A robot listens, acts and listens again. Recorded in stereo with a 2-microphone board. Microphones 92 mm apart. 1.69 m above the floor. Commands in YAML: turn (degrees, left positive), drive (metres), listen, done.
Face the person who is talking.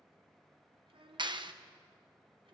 turn: -75
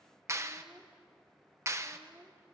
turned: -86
turn: -20
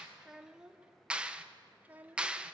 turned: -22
turn: -15
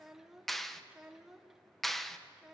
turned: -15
done: "Facing the child speaking."